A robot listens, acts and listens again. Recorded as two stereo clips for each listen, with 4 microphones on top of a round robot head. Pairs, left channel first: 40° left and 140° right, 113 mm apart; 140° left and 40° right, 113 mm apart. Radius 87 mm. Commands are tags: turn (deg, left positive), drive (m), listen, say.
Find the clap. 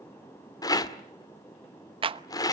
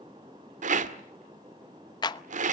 <turn deg="-175"/>
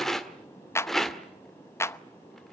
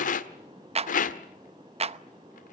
<turn deg="-25"/>
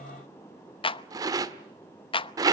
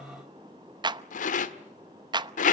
<say>Facing the clap.</say>